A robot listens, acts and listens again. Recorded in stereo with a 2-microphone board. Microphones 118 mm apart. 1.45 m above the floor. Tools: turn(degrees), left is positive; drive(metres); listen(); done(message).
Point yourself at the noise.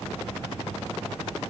listen()
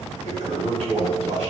turn(degrees=-90)
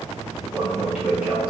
turn(degrees=-15)
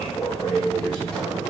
done("Found it: a toilet flushing, straight ahead, 1 to 2 m away.")